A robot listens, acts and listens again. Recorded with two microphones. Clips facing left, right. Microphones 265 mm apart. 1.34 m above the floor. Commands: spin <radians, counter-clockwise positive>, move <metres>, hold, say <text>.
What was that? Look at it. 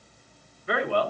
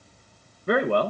spin -0.87
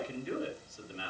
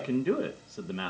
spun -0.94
spin -1.31
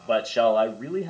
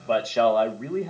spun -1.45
spin 0.17
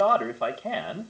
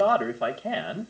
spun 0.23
say Facing the man speaking.